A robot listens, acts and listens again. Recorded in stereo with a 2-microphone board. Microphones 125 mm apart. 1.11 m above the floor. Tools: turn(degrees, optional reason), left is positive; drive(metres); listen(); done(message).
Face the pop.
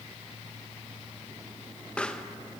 turn(degrees=30)
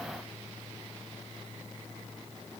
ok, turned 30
listen()
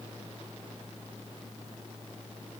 done("I heard a pop, but can't make it out now. It was about 20° right or 140° left.")